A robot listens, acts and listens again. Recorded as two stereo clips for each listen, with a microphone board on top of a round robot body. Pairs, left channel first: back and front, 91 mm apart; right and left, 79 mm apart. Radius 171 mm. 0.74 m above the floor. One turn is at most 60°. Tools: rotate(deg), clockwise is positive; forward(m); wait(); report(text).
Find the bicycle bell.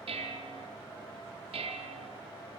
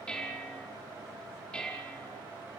wait()
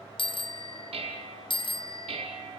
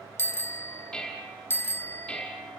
rotate(60)
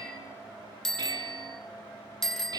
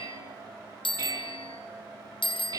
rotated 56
rotate(60)
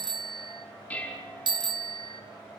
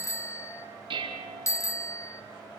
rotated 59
rotate(35)
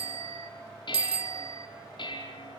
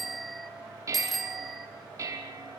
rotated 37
report("Found it: a bicycle bell, straight ahead.")